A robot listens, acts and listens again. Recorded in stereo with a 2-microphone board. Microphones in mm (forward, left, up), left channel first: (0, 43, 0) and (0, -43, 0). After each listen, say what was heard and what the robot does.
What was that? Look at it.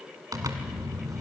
The zipper: about 45° right or 135° right. Turn 45° right.
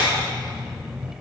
Facing the zipper, 1 to 2 m away.